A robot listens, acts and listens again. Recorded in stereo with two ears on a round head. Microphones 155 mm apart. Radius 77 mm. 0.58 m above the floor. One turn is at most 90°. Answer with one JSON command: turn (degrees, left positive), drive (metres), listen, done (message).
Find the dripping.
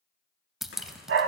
{"turn": 30}
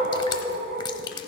{"turn": 90}
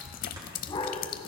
{"turn": 60}
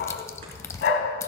{"turn": 20}
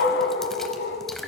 {"done": "Found it: dripping, straight ahead, under 1 m away."}